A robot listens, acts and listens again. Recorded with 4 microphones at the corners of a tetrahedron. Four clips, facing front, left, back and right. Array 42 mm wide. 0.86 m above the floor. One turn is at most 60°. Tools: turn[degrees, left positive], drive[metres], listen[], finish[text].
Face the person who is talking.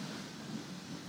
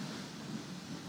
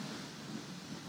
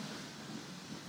Action: listen[]
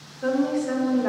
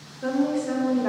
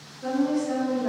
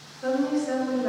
Thought: The woman speaking: 45° left.
Action: turn[45]
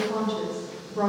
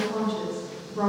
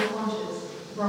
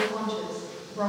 Thought: The woman speaking is now 30° left.
Action: turn[30]
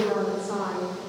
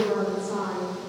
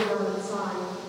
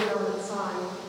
Action: finish[Found it: a woman speaking, straight ahead.]